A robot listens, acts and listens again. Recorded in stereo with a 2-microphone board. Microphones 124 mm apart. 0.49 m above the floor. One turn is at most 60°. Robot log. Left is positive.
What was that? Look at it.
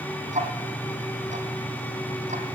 note: The ticking: about 65° right or 115° right.
cmd yaw -60
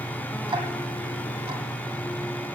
note: So it is at 50° right.
cmd yaw -50
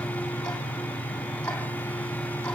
note: The ticking is now 10° left.
cmd yaw +10
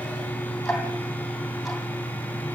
end: Found it: ticking, straight ahead.